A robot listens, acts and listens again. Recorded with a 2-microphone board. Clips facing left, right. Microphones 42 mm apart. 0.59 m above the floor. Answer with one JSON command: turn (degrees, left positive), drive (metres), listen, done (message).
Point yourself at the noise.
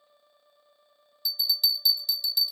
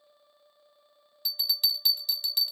{"turn": -50}
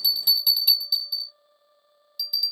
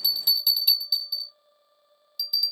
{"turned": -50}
{"done": "Found it: a bell, straight ahead, 1 to 2 m away."}